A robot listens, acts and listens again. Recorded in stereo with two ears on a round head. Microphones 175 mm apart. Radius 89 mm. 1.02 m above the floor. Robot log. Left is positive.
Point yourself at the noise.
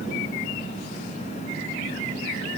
cmd idle
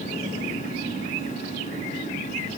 cmd idle
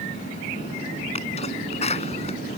note: The sneeze: about 35° left or 145° left.
cmd yaw +35
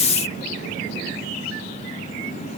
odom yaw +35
cmd idle
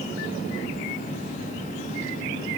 end: I heard a sneeze, but can't make it out now. It was about straight ahead or 110° left.